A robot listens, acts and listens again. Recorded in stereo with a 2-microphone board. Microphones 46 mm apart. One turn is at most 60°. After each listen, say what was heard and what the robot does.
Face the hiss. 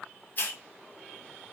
The hiss: about 45° left or 135° left. Turn 45° left.
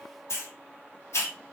So it is at 90° left. Turn 60° left.
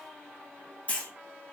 The hiss is now 35° left. Turn 35° left.
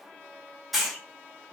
Found it: a hiss, straight ahead, under 1 m away.